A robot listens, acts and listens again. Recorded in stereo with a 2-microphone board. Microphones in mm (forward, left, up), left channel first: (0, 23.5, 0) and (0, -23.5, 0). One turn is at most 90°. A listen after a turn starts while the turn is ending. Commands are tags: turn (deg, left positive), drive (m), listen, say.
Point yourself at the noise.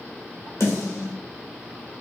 <turn deg="70"/>
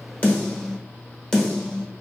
<turn deg="10"/>
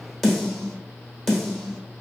<say>Facing the snare drum.</say>